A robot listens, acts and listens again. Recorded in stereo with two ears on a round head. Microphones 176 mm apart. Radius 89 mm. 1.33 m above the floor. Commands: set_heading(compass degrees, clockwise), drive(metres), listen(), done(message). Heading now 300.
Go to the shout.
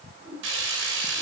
listen()
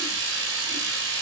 listen()
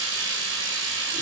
done("I can't make out a shout, only a whoosh and frying.")